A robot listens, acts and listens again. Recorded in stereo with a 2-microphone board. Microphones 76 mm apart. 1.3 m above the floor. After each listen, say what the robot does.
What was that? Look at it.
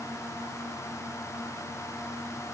Keep listening.
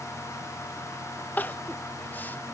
Turn 25° left.
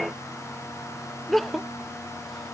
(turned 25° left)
Facing the crying.